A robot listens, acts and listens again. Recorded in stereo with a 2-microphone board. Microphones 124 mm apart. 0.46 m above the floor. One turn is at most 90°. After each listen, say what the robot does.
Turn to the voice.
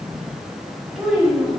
Turn 30° left.
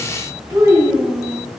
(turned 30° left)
Turn 20° right.
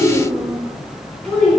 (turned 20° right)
Turn 10° left.
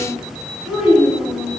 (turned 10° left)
Found it: a child speaking, straight ahead, over 4 m away.